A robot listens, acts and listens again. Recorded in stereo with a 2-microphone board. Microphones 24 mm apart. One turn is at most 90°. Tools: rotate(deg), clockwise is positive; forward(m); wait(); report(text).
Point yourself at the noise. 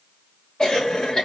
rotate(-35)
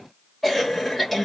report("Found it: a cough, straight ahead.")